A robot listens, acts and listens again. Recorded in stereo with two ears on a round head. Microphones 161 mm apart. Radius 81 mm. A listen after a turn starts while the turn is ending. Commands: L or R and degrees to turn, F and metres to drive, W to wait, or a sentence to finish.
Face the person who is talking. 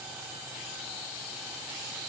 W
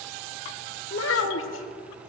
L90
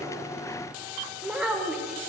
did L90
Found it: a child speaking, straight ahead, 1 to 2 m away.